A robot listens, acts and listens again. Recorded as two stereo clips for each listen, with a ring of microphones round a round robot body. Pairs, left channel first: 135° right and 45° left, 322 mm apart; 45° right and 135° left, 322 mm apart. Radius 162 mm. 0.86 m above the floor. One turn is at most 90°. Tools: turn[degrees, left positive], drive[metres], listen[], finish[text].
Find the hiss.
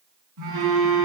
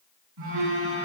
Action: listen[]
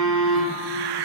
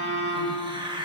Thought: The hiss: 60° left.
Action: turn[60]
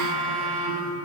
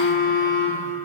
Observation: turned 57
Action: listen[]
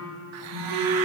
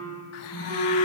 Action: listen[]
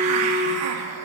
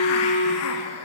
Action: finish[Found it: a hiss, straight ahead.]